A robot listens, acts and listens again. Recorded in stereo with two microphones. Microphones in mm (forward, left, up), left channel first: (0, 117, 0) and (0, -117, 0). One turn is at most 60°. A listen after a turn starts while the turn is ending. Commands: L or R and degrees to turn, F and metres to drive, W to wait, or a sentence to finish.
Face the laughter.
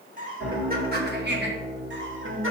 R60
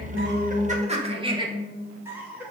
Facing the laughter.